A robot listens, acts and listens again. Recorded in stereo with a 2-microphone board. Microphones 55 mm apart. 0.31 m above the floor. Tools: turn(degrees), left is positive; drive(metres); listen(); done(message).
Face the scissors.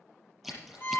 turn(degrees=30)
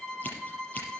listen()
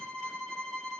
listen()
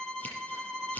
turn(degrees=145)
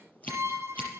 turn(degrees=30)
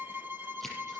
done("Facing the scissors.")